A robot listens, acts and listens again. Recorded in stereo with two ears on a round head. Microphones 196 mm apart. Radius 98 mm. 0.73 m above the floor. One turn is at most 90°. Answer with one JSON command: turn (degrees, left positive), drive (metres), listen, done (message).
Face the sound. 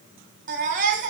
{"turn": -40}
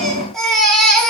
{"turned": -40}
{"done": "Found it: a baby crying, straight ahead."}